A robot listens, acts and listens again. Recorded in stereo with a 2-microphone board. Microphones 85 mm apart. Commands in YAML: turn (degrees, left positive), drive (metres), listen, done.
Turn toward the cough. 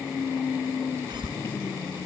turn: -60
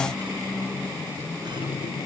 listen: true
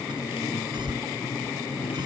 turn: -60
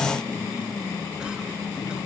listen: true
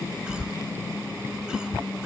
turn: -10
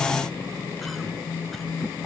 listen: true
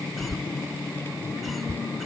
done: "Found it: a cough, straight ahead."